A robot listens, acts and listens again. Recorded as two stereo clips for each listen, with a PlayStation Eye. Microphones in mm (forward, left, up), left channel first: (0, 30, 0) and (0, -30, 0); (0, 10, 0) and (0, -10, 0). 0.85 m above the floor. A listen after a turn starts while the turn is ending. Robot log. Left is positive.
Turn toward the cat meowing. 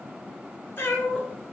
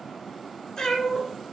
note: The cat meowing: about 30° left or 150° left.
cmd yaw +30
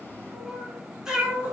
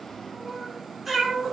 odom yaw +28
note: So it is at 20° right.
cmd yaw -20
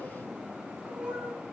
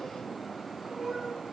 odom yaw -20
note: The cat meowing is now 20° right.
cmd yaw -20
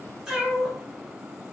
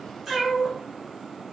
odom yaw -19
note: The cat meowing is now 20° right.
cmd yaw -20
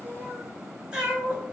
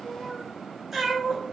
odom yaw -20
note: The cat meowing is now 20° right.
cmd yaw -20
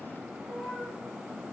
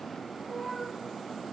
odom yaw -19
end: Facing the cat meowing.